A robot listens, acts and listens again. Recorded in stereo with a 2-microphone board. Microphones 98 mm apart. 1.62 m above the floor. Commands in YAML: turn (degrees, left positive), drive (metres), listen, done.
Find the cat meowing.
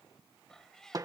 turn: 30
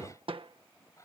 turn: 145
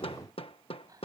turn: -40
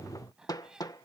turn: -10
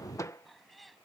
done: "Found it: a cat meowing, straight ahead."